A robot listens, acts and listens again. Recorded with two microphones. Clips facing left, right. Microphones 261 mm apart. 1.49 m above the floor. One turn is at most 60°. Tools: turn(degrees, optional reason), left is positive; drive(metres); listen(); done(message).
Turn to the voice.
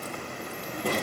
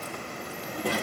turn(degrees=-30)
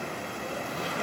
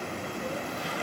listen()
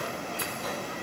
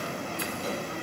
listen()
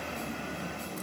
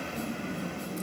turn(degrees=-60, reason="So it is at 145° right.")
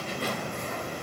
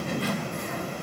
turn(degrees=-60, reason="The child speaking is now 110° right.")
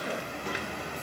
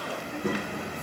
turn(degrees=-60, reason="The child speaking is now 80° right.")
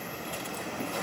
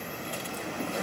turn(degrees=-20, reason="Nothing new. It was at 20° right.")
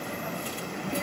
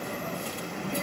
done("Found it: a child speaking, straight ahead.")